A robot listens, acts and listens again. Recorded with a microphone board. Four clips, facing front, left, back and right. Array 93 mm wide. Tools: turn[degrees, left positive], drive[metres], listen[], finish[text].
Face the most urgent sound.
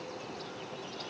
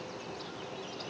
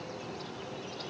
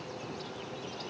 Action: listen[]
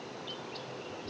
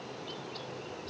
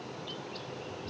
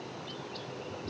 Action: listen[]
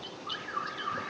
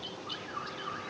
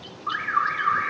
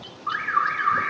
Thought: The alarm: 130° right.
Action: turn[-130]
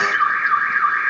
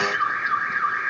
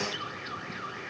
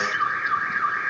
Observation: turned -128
Action: finish[Found it: an alarm, straight ahead.]